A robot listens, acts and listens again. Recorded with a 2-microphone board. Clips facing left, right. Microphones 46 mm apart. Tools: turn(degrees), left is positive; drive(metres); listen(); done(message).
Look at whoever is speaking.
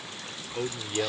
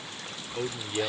turn(degrees=30)
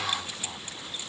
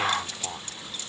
turn(degrees=-25)
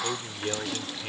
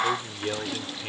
done("Found it: a man speaking, straight ahead.")